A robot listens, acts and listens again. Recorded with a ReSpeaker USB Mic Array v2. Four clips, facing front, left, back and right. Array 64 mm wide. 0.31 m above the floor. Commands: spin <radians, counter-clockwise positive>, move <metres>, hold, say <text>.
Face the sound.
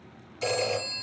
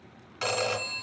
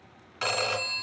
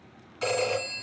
spin 2.71
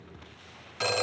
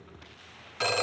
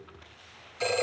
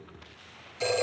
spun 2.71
spin 0.96
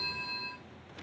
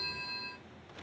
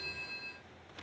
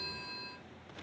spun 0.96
spin 0.17
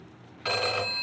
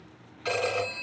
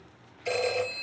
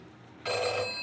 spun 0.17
say Found it: a phone ringing, straight ahead, 2 to 4 m away.